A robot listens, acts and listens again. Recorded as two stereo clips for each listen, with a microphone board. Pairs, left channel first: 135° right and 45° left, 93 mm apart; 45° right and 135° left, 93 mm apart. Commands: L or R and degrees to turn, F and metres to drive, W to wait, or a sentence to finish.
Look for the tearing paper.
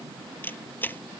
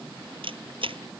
W
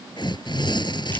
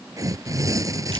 R170
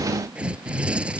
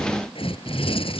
R30
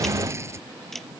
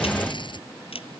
R15
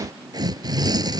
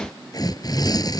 Facing the tearing paper.